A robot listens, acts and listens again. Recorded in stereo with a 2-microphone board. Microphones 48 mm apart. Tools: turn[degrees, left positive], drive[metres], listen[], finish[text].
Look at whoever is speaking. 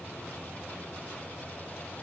Action: listen[]
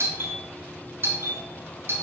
Action: listen[]
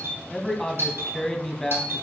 Action: turn[30]
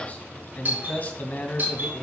Thought: So it is at 140° left.
Action: turn[140]
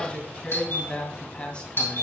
Thought: The man speaking is now 25° left.
Action: turn[25]
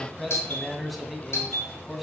Action: finish[Found it: a man speaking, straight ahead.]